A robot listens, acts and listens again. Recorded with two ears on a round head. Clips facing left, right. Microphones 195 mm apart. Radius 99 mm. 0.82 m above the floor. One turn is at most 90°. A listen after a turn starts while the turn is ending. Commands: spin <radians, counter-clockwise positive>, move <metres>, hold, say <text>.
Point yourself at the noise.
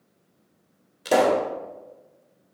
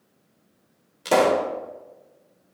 spin 0.52
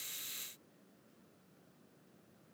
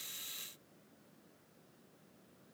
hold
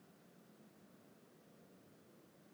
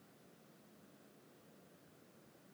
say I heard a pop, but can't make it out now. It was about 30° right or 150° left.